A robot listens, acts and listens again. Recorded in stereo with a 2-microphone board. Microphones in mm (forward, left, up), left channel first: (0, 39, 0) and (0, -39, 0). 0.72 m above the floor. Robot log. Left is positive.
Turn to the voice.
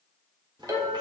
note: The child speaking: about 75° right or 105° right.
cmd yaw -75
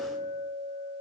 cmd idle
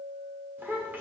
note: So it is at 25° right.
cmd yaw -25
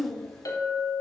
end: Facing the child speaking.